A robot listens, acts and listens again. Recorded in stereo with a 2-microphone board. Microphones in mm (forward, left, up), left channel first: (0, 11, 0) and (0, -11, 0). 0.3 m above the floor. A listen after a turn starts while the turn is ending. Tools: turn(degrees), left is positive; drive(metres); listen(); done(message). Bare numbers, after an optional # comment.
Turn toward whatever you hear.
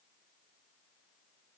listen()
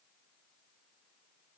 listen()
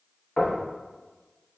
# The knocking: about 55° left or 125° left.
turn(55)
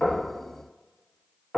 # So it is at 10° left.
turn(10)
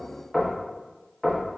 done("Found it: knocking, straight ahead, 1 to 2 m away.")